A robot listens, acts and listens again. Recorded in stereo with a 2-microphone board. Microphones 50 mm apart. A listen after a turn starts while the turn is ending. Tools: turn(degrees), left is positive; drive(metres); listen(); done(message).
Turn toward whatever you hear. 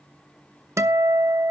turn(degrees=-70)
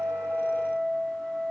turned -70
turn(degrees=-10)
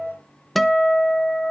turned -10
done("Facing the guitar.")